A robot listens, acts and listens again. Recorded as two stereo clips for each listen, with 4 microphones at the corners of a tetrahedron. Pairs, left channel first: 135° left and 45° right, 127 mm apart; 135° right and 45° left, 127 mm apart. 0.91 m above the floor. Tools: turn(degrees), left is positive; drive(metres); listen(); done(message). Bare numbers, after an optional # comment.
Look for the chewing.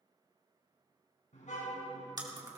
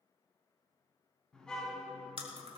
# The chewing: 10° left.
turn(10)
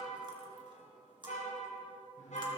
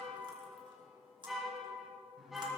done("Facing the chewing, 2 to 4 m away.")